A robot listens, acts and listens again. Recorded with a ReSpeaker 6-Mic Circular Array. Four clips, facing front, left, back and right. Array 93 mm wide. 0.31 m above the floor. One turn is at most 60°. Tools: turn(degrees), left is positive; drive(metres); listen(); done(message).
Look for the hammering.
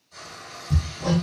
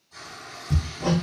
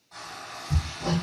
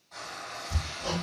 turn(degrees=60)
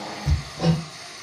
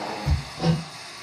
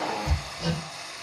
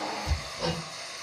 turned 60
turn(degrees=40)
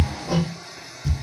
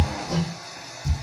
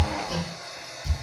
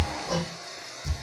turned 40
done("Found it: hammering, straight ahead.")